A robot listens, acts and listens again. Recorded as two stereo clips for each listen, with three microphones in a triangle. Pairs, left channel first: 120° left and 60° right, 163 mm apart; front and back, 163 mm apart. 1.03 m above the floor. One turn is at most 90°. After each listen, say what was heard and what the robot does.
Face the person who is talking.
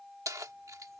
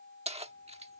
Keep listening.
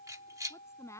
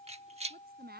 The woman speaking: 170° right. Turn 90° right.
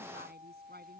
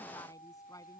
Nothing new. It was at 80° right. Turn 80° right.
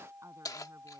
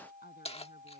Keep listening.
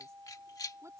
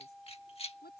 Facing where the woman speaking came from. I can't hear it now.